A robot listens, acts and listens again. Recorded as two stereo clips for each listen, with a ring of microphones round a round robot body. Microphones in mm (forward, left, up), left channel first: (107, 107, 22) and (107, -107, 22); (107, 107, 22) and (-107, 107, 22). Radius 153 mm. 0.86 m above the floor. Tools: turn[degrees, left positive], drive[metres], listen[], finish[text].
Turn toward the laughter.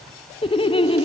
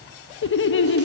Thought: The laughter: 25° left.
Action: turn[25]
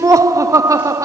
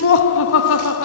Thought: The laughter is now 15° right.
Action: turn[-15]
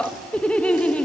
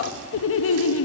Action: finish[Found it: laughter, straight ahead, under 1 m away.]